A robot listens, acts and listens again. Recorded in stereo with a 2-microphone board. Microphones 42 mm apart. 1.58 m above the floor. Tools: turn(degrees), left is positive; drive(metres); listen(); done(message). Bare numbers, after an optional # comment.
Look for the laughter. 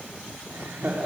turn(-90)
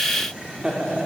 # So it is at 20° right.
turn(-20)
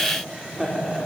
# The laughter is now 15° right.
turn(-15)
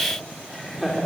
done("Found it: laughter, straight ahead.")